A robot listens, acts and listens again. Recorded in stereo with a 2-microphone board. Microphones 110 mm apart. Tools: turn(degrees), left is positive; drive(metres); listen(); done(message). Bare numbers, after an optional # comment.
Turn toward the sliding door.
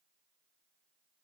listen()
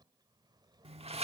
# The sliding door: about 70° right or 110° right.
turn(-70)
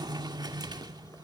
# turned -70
# So it is at 40° right.
turn(-40)
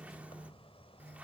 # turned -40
# The sliding door is now 10° right.
turn(-10)
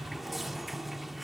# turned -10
done("Facing the sliding door, 1 to 2 m away.")